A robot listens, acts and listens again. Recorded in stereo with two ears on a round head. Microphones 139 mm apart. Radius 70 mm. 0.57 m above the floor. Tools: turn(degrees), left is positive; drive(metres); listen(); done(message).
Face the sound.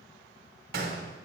turn(degrees=-70)
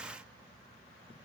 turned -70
listen()
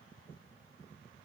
done("I heard a gunshot, but can't make it out now. It was about straight ahead or 40° right.")